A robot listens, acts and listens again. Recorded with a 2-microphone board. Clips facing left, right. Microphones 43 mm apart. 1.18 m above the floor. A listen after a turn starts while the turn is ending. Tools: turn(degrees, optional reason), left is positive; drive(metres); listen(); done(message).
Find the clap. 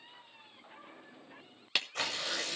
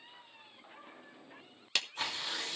turn(degrees=30)
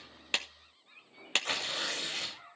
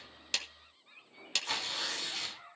turn(degrees=140, reason="So it is at 140° left.")
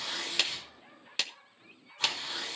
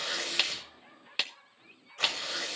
turn(degrees=-15, reason="The clap is now 15° right.")
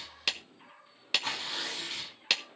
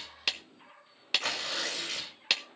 done("Facing the clap.")